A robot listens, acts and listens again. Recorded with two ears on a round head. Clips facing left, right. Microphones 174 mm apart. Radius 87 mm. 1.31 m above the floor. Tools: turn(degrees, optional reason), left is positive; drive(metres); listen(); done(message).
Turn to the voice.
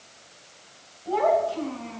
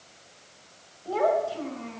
turn(degrees=-40, reason="The child speaking: about 40° right or 140° right.")
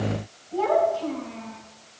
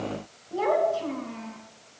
turn(degrees=-95, reason="So it is at 95° right.")
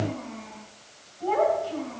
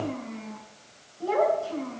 turn(degrees=-45, reason="The child speaking is now 45° right.")
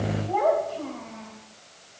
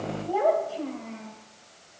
turn(degrees=-10, reason="The child speaking is now 10° right.")
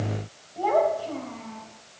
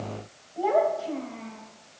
done("Found it: a child speaking, straight ahead.")